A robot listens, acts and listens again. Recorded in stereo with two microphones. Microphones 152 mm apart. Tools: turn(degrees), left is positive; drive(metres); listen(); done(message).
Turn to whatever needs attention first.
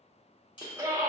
turn(degrees=-20)
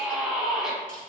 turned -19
done("Found it: a scream, straight ahead, under 1 m away.")